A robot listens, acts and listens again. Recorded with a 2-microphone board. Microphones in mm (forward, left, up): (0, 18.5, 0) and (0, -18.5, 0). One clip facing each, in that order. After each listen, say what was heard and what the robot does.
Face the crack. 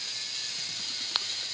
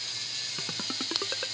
The crack: about 25° left or 155° left. Turn 25° left.
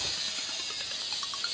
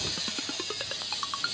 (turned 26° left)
Keep listening.
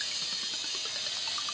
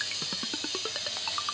I heard a crack, but can't make it out now. It was about straight ahead or 130° left.